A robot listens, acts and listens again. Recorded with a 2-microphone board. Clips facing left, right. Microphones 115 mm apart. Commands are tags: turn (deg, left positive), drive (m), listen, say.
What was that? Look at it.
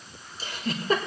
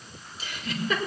<turn deg="40"/>
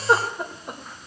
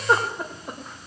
<say>Found it: a giggle, straight ahead.</say>